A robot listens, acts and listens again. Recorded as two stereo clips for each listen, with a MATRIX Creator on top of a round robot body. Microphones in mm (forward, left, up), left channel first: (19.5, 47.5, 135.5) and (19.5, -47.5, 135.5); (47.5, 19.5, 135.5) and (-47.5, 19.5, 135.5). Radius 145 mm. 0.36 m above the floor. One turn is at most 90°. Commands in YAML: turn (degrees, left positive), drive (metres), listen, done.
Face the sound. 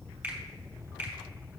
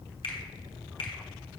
turn: -15
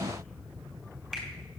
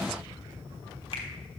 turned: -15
listen: true
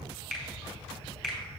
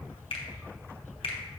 done: "Found it: a finger snap, straight ahead."